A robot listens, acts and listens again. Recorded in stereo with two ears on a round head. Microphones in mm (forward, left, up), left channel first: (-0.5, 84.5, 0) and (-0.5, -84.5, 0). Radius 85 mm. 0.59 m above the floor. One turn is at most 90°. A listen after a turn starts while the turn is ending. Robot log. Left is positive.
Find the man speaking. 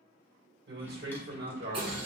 note: The man speaking: about 60° right or 120° right.
cmd yaw -60
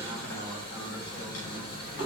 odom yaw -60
cmd idle
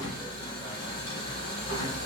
cmd idle
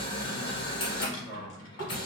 note: So it is at 25° left.
cmd yaw +25
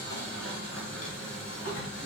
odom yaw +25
cmd idle
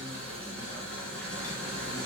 cmd idle
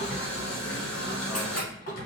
end: I heard a man speaking from this way, but can't make it out now.